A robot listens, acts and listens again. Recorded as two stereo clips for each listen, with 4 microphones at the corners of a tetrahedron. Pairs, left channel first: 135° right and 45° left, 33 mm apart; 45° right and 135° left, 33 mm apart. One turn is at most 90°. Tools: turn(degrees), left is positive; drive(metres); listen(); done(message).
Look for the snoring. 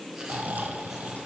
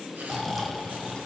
turn(degrees=40)
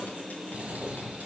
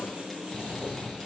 turn(degrees=15)
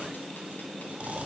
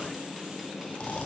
done("Found it: snoring, straight ahead, 1 to 2 m away.")